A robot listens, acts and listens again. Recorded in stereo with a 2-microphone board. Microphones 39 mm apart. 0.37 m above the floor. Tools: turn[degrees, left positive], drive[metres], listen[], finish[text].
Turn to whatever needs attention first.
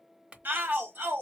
Thought: The shout: about 55° right or 125° right.
Action: turn[-55]
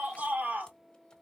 Thought: So it is at 50° right.
Action: turn[-50]
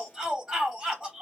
Thought: The shout is now 20° right.
Action: turn[-20]
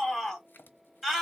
Action: finish[Facing the shout.]